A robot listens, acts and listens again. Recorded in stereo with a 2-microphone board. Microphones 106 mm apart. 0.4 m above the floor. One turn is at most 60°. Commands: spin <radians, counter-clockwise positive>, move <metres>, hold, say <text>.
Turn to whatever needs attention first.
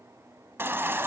spin -0.35
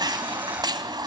spin -1.05
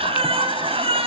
spin -1.05
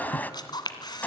spin 0.26
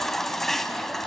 say Found it: a baby crying, straight ahead, 1 to 2 m away.